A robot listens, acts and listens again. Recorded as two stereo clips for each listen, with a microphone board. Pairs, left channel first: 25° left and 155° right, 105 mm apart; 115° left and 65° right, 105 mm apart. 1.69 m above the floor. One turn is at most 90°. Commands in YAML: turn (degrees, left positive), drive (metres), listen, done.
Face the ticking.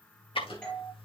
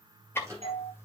turn: 50
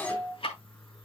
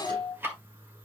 done: "Facing the ticking, 1 to 2 m away."